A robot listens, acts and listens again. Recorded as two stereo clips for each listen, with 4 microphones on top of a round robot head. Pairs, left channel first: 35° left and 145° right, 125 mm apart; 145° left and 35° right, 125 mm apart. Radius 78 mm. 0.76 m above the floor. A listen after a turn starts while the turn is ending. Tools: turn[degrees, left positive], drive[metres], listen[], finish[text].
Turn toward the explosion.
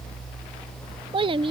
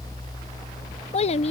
Action: listen[]
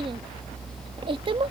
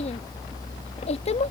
Action: listen[]
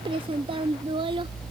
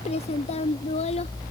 Action: finish[I can't make out an explosion to turn to.]